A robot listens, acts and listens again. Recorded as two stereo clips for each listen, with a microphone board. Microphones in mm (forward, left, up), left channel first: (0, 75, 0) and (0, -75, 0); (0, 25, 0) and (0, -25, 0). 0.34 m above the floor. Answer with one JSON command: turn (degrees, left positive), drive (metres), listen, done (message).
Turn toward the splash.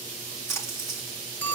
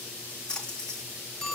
{"turn": 20}
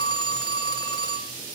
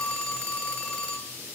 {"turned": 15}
{"listen": true}
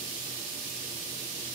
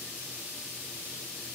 {"done": "I heard a splash, but can't make it out now. It was about 5° left or 145° left."}